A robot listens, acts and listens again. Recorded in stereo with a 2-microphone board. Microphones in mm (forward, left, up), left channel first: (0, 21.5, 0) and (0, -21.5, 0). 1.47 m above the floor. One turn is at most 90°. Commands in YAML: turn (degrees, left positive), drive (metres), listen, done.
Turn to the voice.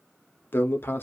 turn: 55
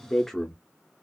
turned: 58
done: "Facing the man speaking, under 1 m away."